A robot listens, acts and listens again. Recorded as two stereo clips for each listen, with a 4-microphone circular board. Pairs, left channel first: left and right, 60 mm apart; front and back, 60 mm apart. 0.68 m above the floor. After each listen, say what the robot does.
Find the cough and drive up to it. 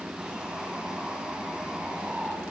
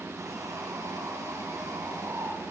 Keep listening.
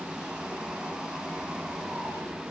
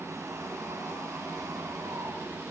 Keep listening.
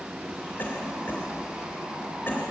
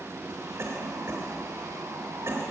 Turn 145° left.
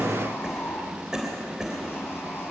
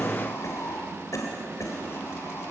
Turn 10° right.
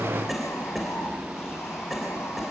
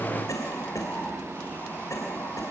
Drive 1.0 m forward.
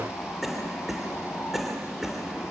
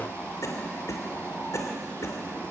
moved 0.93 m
Drive 1.0 m forward.
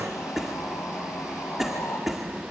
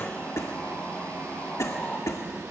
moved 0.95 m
Drive 1.0 m forward.
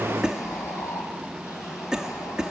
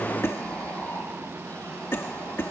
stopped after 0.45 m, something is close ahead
Turn 15° right.
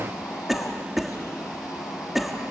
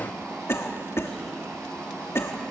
Arrived at the cough, straight ahead.